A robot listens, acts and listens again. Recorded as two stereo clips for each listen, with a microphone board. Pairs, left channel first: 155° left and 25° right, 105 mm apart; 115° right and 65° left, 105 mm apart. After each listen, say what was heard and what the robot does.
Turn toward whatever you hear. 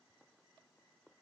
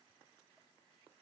Keep listening.
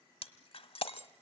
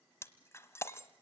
The breaking glass: straight behind. Turn 180° left.
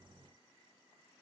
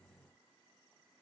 I heard breaking glass from this way, but can't make it out now.